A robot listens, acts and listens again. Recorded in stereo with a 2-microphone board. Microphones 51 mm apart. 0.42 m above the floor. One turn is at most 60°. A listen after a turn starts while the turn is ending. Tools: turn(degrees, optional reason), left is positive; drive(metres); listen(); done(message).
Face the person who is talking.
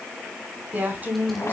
turn(degrees=-35, reason="The woman speaking: about 35° right or 145° right.")
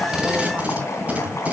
listen()
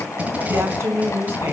turn(degrees=-60, reason="So it is at 105° right.")
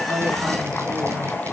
turn(degrees=-45, reason="Nothing new. It was at 45° right.")
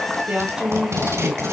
turn(degrees=-25, reason="The woman speaking is now 25° right.")
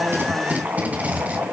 listen()
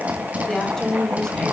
turn(degrees=10, reason="The woman speaking is now 10° left.")
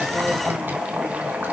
listen()
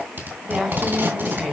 done("Found it: a woman speaking, straight ahead, 2 to 4 m away.")